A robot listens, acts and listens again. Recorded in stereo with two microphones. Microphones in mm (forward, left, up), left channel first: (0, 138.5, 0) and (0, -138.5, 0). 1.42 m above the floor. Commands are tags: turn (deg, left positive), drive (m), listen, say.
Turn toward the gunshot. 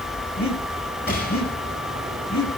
<turn deg="40"/>
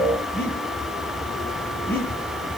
<listen/>
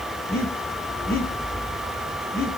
<say>I heard a gunshot, but can't make it out now. It was about straight ahead or 100° left.</say>